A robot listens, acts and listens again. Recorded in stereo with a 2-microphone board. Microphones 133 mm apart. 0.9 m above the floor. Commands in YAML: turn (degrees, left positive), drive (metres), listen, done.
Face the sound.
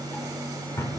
turn: 25
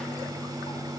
listen: true
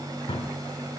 turn: 130
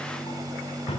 turn: 50
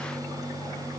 listen: true
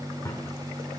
turn: 25
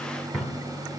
done: "Facing the drawer, 1 to 2 m away."